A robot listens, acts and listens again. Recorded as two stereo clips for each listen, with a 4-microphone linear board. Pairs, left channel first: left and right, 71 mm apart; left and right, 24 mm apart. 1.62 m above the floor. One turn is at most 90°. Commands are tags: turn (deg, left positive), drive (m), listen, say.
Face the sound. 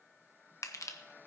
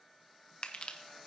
<turn deg="45"/>
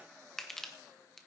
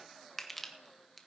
<say>Facing the crushing, 1 to 2 m away.</say>